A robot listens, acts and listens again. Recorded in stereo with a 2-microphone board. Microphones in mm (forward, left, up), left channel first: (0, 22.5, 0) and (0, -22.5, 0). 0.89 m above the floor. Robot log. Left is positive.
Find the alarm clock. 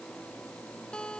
cmd idle
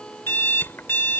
note: The alarm clock: about 50° left or 130° left.
cmd yaw +50
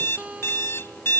note: So it is at 75° left.
cmd yaw +75
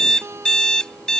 note: The alarm clock is now 20° left.
cmd yaw +20
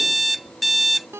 end: Found it: an alarm clock, straight ahead.